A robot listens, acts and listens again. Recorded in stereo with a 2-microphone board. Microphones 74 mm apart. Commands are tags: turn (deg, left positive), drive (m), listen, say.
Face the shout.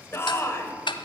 <turn deg="35"/>
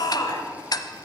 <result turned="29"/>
<turn deg="110"/>
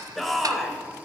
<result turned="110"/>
<say>Facing the shout, 2 to 4 m away.</say>